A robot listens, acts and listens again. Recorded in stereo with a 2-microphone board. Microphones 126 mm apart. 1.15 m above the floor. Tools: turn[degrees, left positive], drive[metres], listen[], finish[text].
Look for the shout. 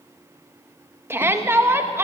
Thought: The shout: about 20° right or 160° right.
Action: turn[-20]
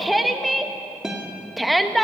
Action: finish[Facing the shout, 1 to 2 m away.]